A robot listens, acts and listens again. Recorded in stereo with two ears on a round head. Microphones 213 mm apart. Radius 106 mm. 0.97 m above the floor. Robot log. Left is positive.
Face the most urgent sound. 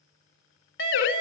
note: The siren: about 55° left or 125° left.
cmd yaw +55
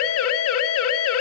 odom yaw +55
note: So it is at 70° left.
cmd yaw +70
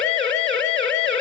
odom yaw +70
end: Facing the siren.